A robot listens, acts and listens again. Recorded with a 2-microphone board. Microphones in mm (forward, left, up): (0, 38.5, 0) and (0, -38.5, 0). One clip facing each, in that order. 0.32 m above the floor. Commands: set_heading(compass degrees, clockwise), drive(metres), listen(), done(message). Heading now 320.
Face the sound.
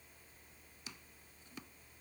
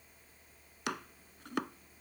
set_heading(50)
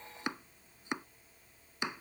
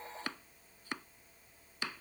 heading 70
set_heading(50)
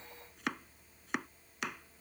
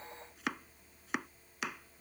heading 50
done("Found it: chopping, straight ahead.")